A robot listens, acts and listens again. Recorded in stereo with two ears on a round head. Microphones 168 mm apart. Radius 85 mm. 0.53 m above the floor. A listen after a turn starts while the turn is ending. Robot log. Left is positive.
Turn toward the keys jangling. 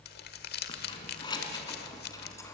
note: The keys jangling: about 20° left or 160° left.
cmd yaw +20
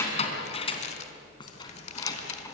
note: The keys jangling: about 15° left or 165° left.
cmd yaw +15
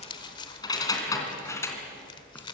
cmd yaw +30
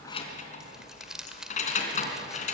note: So it is at 140° left.
cmd yaw +140
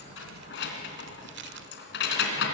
note: The keys jangling is now 60° left.
cmd yaw +60
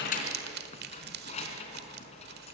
note: The keys jangling is now 35° left.
cmd yaw +35
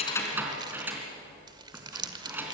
note: The keys jangling is now 10° right.
cmd yaw -10
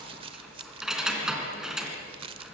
end: Found it: keys jangling, straight ahead.